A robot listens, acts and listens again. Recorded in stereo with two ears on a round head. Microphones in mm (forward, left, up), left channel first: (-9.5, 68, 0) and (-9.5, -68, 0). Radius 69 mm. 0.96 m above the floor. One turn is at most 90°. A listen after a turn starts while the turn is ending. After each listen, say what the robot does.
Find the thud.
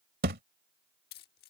Turn 65° right.
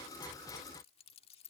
Keep listening.
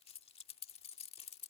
I heard a thud, but can't make it out now. It was about straight ahead or 50° right.